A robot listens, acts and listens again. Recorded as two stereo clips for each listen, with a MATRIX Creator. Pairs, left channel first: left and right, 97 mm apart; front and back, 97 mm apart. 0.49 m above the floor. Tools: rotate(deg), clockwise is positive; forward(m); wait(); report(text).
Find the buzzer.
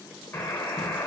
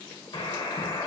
rotate(-30)
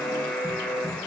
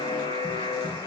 rotate(-15)
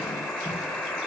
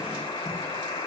report("Facing the buzzer.")